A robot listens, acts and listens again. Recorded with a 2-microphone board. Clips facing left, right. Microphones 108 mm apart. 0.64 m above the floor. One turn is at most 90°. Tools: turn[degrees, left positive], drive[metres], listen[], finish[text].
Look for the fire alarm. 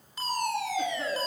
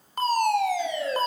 Thought: The fire alarm: about 55° right or 125° right.
Action: turn[-55]
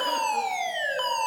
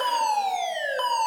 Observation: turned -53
Thought: So it is at 20° right.
Action: turn[-20]
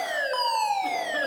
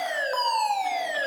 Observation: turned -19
Action: finish[Facing the fire alarm.]